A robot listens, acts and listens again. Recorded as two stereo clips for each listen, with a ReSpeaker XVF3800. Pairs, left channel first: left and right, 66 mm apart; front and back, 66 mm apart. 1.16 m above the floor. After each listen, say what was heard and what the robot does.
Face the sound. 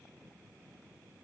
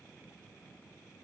Keep listening.
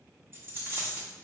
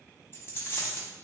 The dropped coin: 45° right. Turn 45° right.
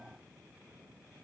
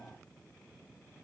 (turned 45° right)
I heard a dropped coin from this way, but can't make it out now.